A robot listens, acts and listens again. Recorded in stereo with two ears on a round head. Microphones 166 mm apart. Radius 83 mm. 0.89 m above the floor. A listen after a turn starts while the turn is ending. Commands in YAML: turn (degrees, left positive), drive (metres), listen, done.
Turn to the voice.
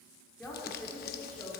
turn: 30
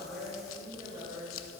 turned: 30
turn: -25
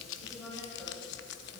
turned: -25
done: "Facing the woman speaking."